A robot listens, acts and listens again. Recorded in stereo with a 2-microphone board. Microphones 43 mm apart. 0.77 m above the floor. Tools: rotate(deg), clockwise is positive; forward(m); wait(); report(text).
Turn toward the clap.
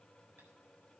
wait()
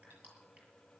wait()
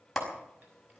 rotate(-30)
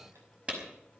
rotate(25)
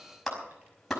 report("Found it: a clap, straight ahead, over 4 m away.")